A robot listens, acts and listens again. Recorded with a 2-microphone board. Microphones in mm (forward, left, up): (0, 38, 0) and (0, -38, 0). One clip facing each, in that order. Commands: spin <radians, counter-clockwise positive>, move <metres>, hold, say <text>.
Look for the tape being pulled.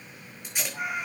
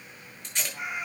spin 0.52
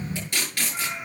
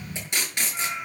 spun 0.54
spin -0.35
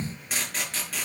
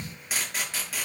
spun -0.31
say Facing the tape being pulled, over 4 m away.